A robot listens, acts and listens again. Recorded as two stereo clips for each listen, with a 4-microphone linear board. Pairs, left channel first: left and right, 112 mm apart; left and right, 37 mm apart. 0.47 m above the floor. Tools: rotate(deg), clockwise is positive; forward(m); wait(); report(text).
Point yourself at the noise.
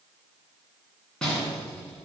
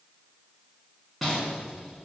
rotate(-30)
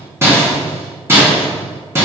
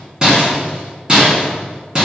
rotate(25)
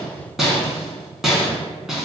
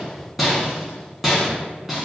report("Found it: a rattle, straight ahead.")